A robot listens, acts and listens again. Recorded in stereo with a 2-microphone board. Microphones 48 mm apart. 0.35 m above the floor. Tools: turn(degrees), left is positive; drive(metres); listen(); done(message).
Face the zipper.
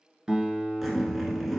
turn(degrees=-30)
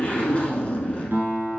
turn(degrees=30)
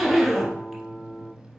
done("Found it: a zipper, straight ahead.")